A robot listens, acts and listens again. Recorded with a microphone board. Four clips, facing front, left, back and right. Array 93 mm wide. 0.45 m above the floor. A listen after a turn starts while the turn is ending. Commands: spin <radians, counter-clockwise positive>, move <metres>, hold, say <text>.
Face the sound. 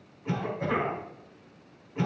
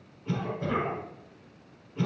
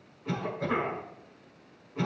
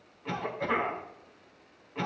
spin -1.22
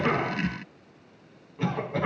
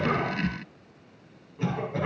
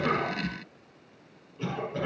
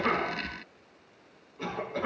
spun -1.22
spin 0.17
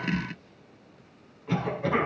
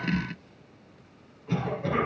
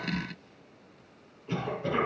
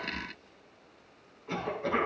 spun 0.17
say Facing the cough, over 4 m away.